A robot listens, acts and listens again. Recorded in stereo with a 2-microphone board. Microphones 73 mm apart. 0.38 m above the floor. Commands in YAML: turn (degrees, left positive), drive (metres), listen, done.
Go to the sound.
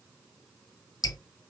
turn: 65
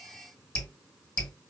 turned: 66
turn: 20
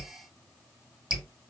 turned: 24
drive: 1.0
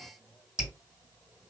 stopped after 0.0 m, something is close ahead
turn: -10
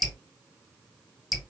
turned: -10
done: "Blocked. The dripping is further on, straight ahead."